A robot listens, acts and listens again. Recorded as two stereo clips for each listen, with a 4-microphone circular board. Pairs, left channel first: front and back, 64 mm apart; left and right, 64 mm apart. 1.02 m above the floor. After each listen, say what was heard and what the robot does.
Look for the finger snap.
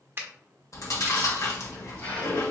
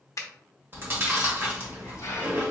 The finger snap: 125° left. Turn 125° left.
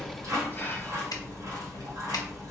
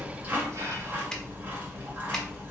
Keep listening.
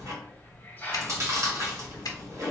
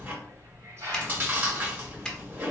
Keep listening.
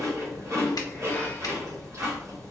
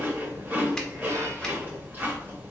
I heard a finger snap from this way, but can't make it out now.